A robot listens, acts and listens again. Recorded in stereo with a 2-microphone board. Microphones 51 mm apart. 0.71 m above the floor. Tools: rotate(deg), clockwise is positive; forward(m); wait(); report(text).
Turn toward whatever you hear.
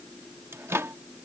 rotate(60)
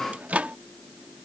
rotate(35)
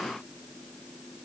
wait()
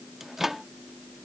rotate(10)
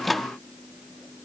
report("Facing the microwave.")